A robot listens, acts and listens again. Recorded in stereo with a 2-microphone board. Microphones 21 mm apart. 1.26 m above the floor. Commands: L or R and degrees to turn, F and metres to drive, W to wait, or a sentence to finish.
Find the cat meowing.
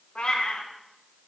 L60
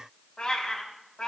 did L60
L40
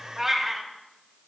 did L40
R20
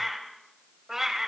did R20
R30
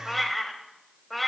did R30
Facing the cat meowing, 2 to 4 m away.